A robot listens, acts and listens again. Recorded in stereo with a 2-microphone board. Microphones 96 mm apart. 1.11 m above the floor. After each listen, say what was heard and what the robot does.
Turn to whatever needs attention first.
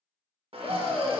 Turn 30° right.
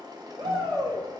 So it is at 135° right. Turn 135° right.
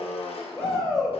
Facing the shout, 1 to 2 m away.